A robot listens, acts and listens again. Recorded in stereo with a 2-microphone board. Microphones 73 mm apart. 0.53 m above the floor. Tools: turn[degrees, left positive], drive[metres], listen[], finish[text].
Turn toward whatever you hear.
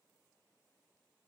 Action: listen[]
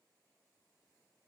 Action: listen[]
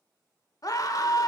Thought: The scream: about 50° left or 130° left.
Action: turn[50]
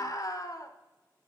Thought: So it is at 65° left.
Action: turn[65]
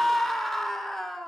Action: finish[Found it: a scream, straight ahead.]